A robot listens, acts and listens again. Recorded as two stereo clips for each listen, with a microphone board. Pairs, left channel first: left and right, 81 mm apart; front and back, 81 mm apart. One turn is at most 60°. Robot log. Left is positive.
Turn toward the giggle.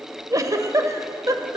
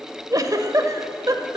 note: The giggle: 135° right.
cmd yaw -60
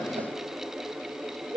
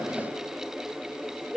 note: The giggle is now 95° right.
cmd yaw -60
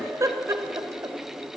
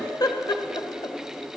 note: The giggle is now 35° right.
cmd yaw -35
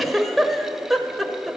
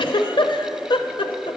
end: Found it: a giggle, straight ahead.